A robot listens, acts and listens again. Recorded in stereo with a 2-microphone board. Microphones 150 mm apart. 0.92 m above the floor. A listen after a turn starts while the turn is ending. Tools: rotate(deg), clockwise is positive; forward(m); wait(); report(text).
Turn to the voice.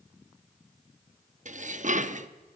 wait()
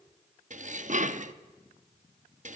wait()
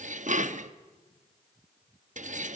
report("I can't make out anyone speaking to turn to.")